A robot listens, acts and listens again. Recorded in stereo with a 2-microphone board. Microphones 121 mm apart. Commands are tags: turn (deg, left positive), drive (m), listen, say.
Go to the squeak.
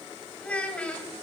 <listen/>
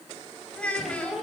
<turn deg="30"/>
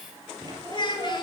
<turn deg="-35"/>
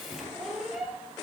<drive m="1.0"/>
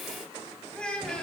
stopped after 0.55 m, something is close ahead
<listen/>
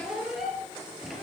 <say>Something is in my way. I am facing the squeak but have not reached it.</say>